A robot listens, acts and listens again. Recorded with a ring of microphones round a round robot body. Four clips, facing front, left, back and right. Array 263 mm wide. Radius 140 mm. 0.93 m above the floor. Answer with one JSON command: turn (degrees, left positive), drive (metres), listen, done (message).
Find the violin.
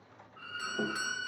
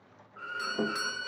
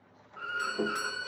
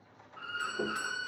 {"turn": 140}
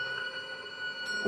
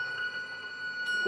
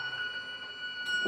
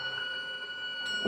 {"turn": -15}
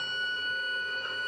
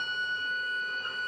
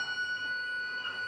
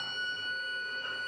{"done": "Facing the violin."}